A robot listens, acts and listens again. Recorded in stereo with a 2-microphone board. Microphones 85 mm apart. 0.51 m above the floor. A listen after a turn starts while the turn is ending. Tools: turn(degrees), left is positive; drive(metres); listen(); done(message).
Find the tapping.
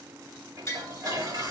turn(degrees=35)
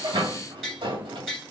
done("Facing the tapping, 2 to 4 m away.")